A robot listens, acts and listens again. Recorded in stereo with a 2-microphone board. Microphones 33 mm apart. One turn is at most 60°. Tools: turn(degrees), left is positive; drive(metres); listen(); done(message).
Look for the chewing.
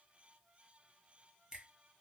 listen()
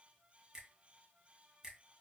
listen()
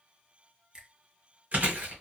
turn(degrees=-50)
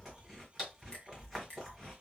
done("Facing the chewing, 1 to 2 m away.")